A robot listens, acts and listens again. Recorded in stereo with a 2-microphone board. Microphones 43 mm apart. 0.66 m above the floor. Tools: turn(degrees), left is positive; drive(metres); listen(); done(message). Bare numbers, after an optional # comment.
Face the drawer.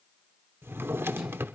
# The drawer: about 70° right or 110° right.
turn(-70)
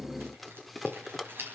done("Facing the drawer, under 1 m away.")